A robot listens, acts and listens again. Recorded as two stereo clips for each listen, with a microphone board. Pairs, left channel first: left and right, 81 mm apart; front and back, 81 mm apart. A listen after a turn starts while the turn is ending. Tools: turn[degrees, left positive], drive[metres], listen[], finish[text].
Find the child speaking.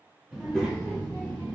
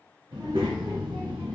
Thought: The child speaking: 160° left.
Action: turn[160]
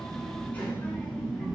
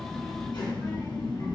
Action: finish[Found it: a child speaking, straight ahead, 1 to 2 m away.]